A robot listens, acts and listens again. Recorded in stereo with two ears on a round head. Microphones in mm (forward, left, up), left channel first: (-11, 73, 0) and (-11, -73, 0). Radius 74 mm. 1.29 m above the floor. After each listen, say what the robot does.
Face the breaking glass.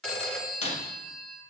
Turn 45° left.
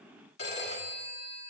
Keep listening.
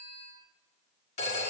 I heard breaking glass, but can't make it out now. It was about straight ahead or 90° left.